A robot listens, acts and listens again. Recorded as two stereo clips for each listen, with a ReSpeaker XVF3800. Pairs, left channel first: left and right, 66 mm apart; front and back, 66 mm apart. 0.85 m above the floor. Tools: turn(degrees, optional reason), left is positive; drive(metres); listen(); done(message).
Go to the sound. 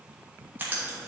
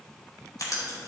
turn(degrees=-30, reason="The writing: 30° right.")
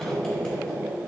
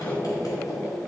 turn(degrees=15, reason="The writing is now 15° left.")
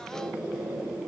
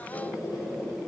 drive(metres=1.0)
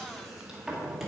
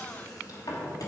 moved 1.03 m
drive(metres=1.0)
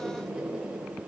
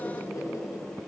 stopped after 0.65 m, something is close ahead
turn(degrees=-10, reason="The writing is now 10° right.")
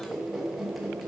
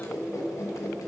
done("Arrived at the writing, straight ahead.")